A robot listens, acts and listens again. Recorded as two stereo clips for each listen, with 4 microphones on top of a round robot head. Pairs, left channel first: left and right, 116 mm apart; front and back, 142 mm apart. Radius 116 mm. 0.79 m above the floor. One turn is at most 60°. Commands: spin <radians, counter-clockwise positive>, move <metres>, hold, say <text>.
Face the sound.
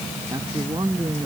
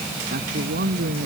spin -1.05
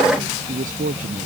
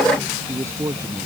spin -1.05
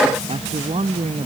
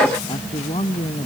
spin -1.05
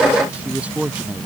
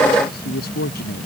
spin -0.26
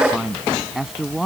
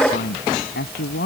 say Facing the man speaking.